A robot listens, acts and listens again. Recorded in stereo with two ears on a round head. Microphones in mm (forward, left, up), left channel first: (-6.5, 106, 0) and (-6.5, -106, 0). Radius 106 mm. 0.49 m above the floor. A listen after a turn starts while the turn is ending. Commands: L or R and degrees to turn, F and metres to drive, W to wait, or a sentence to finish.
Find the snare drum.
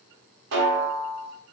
R50
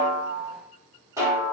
R15
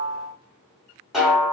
Found it: a snare drum, straight ahead.